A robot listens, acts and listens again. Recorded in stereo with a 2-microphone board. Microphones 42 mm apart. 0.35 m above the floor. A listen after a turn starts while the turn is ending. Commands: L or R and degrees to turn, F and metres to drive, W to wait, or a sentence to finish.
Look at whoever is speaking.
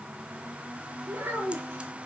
R90
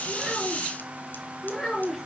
L15
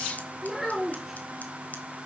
Found it: a child speaking, straight ahead, over 4 m away.